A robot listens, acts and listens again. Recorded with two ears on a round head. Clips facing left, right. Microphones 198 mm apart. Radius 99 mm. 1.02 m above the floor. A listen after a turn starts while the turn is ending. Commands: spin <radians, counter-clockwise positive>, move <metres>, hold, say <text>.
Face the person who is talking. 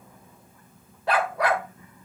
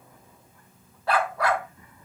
hold
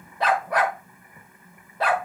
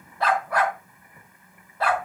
hold
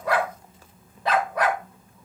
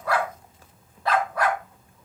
say I can't make out anyone speaking, only a dog barking.